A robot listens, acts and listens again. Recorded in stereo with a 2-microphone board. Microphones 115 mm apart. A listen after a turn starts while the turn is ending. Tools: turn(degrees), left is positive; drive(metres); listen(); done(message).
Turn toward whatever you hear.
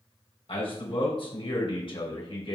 turn(degrees=55)
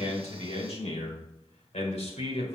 turn(degrees=85)
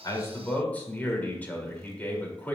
turn(degrees=15)
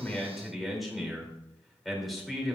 done("Facing the man speaking.")